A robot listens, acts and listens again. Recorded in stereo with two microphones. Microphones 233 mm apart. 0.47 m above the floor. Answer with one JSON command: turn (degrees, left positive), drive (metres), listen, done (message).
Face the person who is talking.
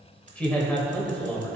{"turn": 30}
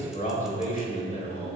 {"turn": 140}
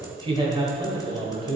{"turn": -25}
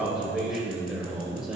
{"done": "Found it: a man speaking, straight ahead."}